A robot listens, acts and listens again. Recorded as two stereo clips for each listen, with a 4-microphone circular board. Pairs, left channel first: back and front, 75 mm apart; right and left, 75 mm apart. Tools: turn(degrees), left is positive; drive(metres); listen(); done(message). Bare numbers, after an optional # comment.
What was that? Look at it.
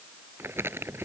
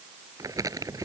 # The crumpling: 55° left.
turn(55)
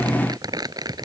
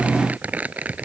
# The crumpling is now 20° left.
turn(20)
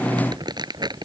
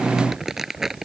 done("Facing the crumpling.")